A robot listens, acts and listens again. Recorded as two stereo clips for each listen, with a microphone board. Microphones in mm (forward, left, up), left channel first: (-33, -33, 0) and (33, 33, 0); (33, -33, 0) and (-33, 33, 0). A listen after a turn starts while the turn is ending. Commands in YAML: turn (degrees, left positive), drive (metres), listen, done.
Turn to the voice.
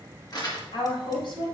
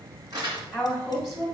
turn: -140
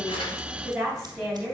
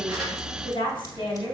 turn: -45
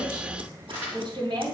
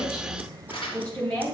turn: 15
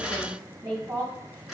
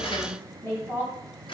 done: "Found it: a woman speaking, straight ahead."